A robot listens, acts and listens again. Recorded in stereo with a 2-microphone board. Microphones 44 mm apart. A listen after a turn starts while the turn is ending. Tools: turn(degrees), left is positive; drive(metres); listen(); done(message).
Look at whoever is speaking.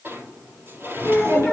turn(degrees=-90)
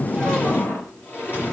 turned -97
listen()
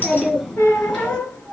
turn(degrees=15)
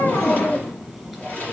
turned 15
done("Facing the child speaking, over 4 m away.")